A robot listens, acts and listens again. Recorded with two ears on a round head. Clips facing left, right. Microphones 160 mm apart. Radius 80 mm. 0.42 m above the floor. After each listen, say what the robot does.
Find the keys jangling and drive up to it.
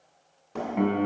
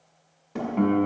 Keep listening.
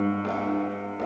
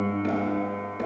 Keep listening.
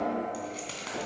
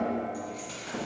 Turn 90° left.
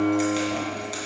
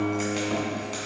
Drive 1.0 m forward.
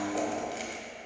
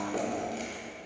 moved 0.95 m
Keep listening.
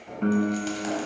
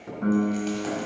Keep listening.
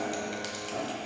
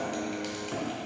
I heard keys jangling from this way, but can't make it out now. I did not reach it.